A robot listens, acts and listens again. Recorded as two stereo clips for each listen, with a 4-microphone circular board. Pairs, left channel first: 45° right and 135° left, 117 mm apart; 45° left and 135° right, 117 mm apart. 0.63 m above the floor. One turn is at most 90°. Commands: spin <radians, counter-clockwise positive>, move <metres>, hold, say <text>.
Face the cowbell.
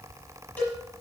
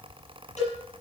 spin 0.52
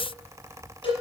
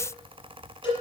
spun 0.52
say Found it: a cowbell, straight ahead, over 4 m away.